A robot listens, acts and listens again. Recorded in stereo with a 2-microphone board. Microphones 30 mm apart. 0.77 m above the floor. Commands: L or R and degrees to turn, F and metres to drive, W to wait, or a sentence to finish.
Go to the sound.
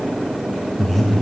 L30
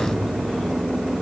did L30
W
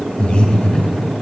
L145
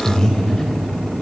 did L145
L20
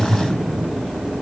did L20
F1.0
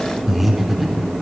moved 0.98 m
F1.0
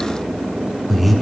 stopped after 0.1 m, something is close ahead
I am next to the breathing.